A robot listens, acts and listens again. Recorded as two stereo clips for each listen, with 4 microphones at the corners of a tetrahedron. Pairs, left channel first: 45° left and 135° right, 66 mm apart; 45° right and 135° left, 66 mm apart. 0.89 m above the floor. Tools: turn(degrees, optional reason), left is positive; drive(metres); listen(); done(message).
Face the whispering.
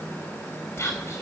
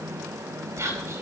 turn(degrees=95, reason="The whispering: 95° left.")
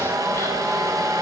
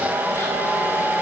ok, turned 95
listen()
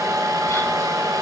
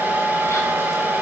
listen()
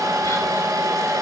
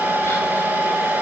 done("Facing where the whispering came from. I can't hear it now.")